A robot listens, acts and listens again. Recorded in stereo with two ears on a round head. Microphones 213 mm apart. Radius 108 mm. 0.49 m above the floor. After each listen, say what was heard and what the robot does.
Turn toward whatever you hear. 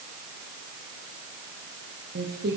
The singing: about 40° right or 140° right. Turn 40° right.
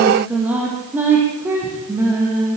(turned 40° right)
So it is at 15° right. Turn 15° right.
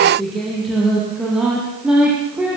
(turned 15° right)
Found it: singing, straight ahead, over 4 m away.